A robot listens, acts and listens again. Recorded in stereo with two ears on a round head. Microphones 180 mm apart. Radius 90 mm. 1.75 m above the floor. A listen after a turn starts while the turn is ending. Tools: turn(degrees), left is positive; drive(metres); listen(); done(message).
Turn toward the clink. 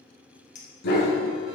turn(degrees=35)
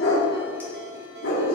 listen()
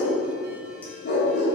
listen()
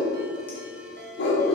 done("I heard a clink, but can't make it out now. It was about straight ahead or 110° left.")